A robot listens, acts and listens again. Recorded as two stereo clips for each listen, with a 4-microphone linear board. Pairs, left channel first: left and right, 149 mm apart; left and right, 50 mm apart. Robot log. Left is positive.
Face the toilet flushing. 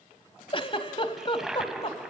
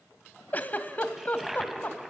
cmd yaw -30
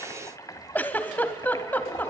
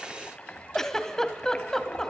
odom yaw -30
note: So it is at 25° left.
cmd yaw +25
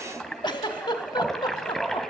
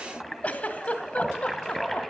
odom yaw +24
end: Facing the toilet flushing, 1 to 2 m away.